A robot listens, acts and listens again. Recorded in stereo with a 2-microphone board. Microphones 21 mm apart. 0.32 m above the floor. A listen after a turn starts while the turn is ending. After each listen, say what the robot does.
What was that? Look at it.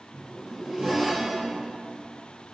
Turn 35° right.
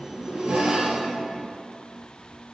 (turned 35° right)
Turn 110° right.
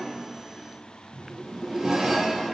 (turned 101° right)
Turn 10° right.
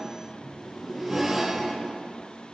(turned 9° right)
Found it: a zipper, straight ahead.